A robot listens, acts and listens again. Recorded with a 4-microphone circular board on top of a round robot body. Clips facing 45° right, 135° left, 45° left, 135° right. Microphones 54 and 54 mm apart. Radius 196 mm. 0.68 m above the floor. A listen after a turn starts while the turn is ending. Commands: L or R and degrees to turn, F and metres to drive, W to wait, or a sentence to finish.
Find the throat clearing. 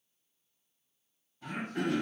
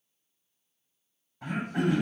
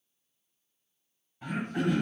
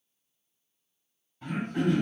L130
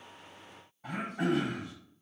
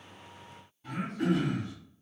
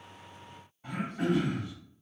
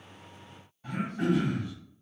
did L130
R25
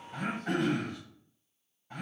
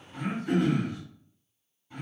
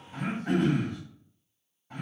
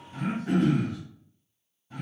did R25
L10
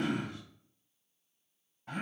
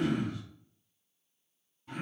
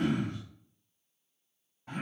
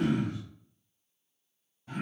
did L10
Facing the throat clearing, 2 to 4 m away.